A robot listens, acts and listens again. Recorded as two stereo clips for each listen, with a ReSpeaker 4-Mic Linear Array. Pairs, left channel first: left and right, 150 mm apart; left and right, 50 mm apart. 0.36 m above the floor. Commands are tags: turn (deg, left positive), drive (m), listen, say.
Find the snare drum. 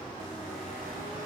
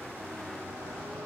<listen/>
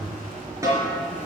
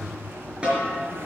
<turn deg="-20"/>
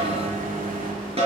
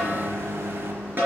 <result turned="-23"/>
<turn deg="-135"/>
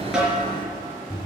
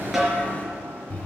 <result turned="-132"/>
<say>Facing the snare drum.</say>